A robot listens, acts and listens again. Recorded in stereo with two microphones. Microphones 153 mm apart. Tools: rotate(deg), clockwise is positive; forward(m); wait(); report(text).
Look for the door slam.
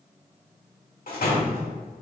rotate(-75)
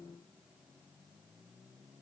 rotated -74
wait()
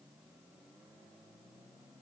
report("I heard a door slam, but can't make it out now. It was about straight ahead or 30° left.")